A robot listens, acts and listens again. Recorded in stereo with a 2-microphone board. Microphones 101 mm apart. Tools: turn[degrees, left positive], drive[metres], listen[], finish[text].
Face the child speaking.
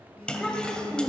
Action: turn[30]
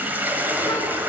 Action: listen[]
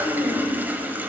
Thought: So it is at 125° left.
Action: turn[125]
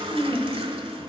Thought: The child speaking is now 10° left.
Action: turn[10]
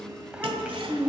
Thought: The child speaking is now 15° right.
Action: turn[-15]
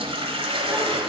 Action: listen[]
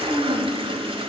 Action: finish[Facing the child speaking.]